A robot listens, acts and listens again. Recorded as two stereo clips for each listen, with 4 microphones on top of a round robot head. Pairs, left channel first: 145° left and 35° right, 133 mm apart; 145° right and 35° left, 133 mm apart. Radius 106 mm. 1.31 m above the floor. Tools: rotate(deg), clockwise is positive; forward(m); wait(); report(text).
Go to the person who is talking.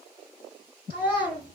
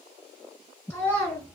rotate(-150)
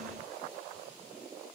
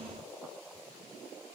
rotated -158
rotate(10)
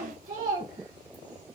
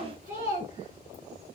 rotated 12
forward(1.0)
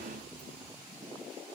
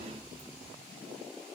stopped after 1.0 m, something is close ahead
wait()
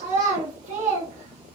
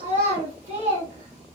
report("I am next to the child speaking.")